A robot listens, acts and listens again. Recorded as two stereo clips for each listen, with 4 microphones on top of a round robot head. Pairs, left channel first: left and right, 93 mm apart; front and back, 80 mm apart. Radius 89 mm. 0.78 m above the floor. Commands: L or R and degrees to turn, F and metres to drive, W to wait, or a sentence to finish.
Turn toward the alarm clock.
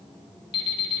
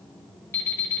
L60
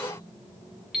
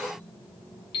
Facing the alarm clock.